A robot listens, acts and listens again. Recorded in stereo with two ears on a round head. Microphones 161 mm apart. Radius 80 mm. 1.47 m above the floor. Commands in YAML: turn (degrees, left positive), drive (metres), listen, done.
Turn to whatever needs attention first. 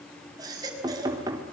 turn: -20
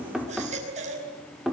turn: -140
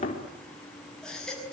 done: "Found it: a baby crying, straight ahead."